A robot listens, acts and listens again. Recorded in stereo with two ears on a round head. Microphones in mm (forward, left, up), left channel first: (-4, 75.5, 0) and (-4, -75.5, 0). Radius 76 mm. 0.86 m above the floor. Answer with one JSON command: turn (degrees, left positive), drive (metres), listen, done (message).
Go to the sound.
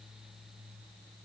{"listen": true}
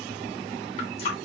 {"turn": 40}
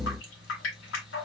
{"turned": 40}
{"turn": 100}
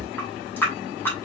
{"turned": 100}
{"turn": 15}
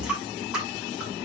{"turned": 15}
{"drive": 1.0}
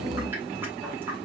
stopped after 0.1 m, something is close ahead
{"listen": true}
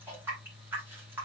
{"turn": -10}
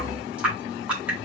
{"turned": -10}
{"done": "Something is in my way. I am facing the running tap but have not reached it."}